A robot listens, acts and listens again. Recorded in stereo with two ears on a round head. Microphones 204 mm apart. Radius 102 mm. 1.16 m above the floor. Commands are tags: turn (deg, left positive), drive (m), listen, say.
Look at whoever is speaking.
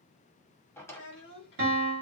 <turn deg="55"/>
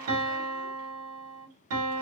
<listen/>
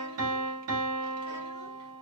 <listen/>
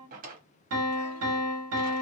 <say>I heard a child speaking, but can't make it out now. It was about straight ahead or 70° left.</say>